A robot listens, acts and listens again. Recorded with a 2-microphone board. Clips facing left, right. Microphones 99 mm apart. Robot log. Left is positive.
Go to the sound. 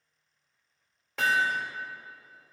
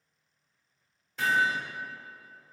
cmd yaw +90
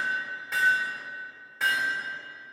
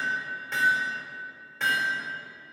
cmd fwd 1.0
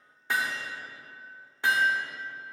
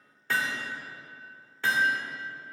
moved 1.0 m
note: The hammering is now 20° left.
cmd yaw +20
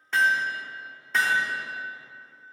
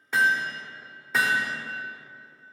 cmd fwd 1.0
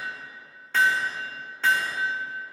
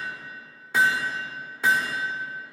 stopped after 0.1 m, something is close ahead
note: The hammering is now 10° right.
cmd yaw -10
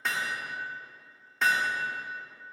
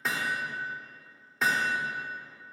end: Arrived at the hammering, straight ahead.